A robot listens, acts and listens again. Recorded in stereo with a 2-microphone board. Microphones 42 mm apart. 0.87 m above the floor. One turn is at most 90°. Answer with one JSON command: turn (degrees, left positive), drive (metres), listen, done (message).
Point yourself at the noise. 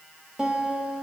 {"turn": -20}
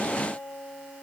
{"turn": -90}
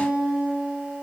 {"turn": -30}
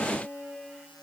{"turn": -25}
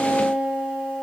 {"turn": -10}
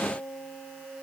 {"done": "Found it: a guitar, straight ahead."}